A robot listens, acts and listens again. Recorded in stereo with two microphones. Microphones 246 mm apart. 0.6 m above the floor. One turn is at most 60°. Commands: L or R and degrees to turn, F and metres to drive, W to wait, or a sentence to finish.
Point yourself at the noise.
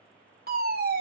R40
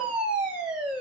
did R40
Facing the fire alarm, 2 to 4 m away.